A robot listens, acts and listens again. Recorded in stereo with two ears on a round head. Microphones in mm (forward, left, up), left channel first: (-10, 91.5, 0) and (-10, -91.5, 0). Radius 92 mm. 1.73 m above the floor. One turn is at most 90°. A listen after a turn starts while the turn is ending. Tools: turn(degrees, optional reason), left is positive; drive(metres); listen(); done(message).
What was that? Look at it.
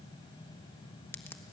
turn(degrees=30)
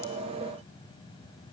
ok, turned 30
listen()
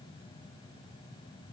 done("I heard a crack, but can't make it out now. It was about 20° right or 140° left.")